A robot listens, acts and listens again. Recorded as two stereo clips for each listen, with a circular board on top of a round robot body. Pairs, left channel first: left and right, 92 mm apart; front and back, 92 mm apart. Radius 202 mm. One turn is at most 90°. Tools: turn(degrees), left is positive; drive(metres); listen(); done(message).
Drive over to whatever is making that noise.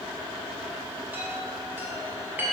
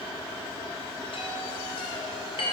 turn(degrees=-20)
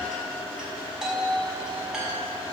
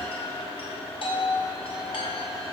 drive(metres=1.0)
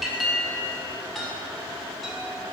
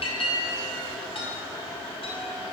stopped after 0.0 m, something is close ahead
done("Blocked. The chime is further on, straight ahead.")